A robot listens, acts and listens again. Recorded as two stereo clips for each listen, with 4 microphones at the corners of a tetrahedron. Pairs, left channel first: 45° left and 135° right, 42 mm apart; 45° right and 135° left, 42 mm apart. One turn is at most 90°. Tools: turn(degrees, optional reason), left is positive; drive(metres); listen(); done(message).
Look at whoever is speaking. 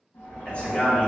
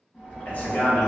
done("Facing the man speaking.")